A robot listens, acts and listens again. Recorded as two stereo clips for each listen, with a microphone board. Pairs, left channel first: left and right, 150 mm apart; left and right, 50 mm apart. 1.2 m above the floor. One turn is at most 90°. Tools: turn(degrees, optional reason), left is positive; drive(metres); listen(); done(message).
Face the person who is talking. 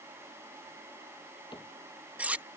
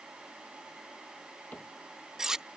listen()
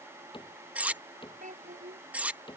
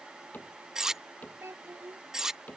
turn(degrees=-55, reason="The child speaking: about 55° right or 125° right.")
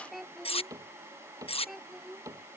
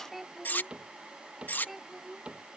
done("Found it: a child speaking, straight ahead.")